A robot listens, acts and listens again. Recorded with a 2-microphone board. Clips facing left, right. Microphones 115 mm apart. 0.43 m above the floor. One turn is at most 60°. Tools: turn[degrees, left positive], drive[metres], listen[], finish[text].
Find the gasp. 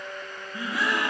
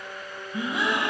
Thought: The gasp: about 20° right or 160° right.
Action: turn[-20]
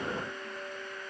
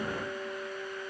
Action: listen[]
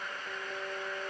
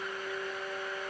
Action: finish[I heard a gasp, but can't make it out now. It was about straight ahead or 140° right.]